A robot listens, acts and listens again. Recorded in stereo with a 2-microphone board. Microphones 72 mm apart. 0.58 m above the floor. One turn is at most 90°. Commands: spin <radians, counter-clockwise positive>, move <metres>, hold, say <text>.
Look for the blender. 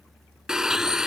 spin -0.52
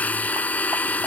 spin 0.35
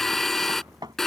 say Found it: a blender, straight ahead.